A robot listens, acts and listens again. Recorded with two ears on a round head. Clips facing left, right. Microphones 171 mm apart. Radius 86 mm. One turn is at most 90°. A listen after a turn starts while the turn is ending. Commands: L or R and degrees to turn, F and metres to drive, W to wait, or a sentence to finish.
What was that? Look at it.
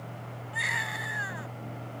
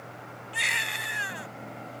R35
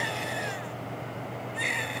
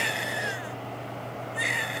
Found it: a baby crying, straight ahead.